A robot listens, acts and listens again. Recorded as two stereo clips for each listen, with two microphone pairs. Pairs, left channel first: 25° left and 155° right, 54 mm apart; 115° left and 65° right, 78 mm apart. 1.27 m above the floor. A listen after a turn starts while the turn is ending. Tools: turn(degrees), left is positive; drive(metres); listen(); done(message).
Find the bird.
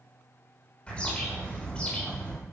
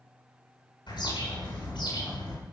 turn(degrees=95)
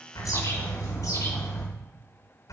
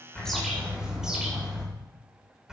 turn(degrees=15)
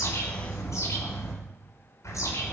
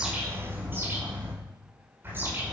done("Facing the bird, over 4 m away.")